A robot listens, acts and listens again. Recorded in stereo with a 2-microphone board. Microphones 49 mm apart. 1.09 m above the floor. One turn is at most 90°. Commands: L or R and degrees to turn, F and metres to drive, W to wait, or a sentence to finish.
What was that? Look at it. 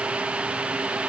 W
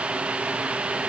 W
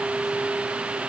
I can't make out anything.